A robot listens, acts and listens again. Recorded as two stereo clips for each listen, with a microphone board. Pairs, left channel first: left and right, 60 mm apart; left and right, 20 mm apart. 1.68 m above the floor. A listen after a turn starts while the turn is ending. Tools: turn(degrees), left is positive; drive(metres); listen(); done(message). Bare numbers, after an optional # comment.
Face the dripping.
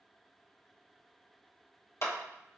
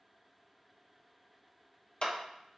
listen()
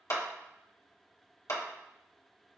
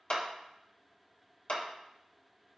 listen()
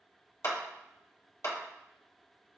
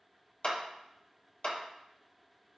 done("I can't make out dripping to turn to.")